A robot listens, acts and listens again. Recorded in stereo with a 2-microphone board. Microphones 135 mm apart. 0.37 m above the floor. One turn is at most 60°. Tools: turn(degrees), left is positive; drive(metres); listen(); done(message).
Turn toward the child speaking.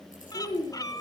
turn(degrees=35)
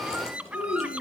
turn(degrees=60)
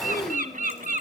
turn(degrees=55)
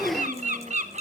turn(degrees=25)
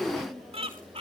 turn(degrees=10)
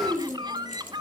done("Facing the child speaking, 2 to 4 m away.")